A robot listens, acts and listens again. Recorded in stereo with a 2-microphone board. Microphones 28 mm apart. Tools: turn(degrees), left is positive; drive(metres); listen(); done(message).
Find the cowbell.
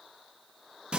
listen()
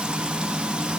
listen()
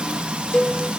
turn(degrees=40)
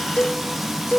turn(degrees=95)
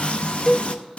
turn(degrees=25)
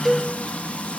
done("Facing the cowbell, 1 to 2 m away.")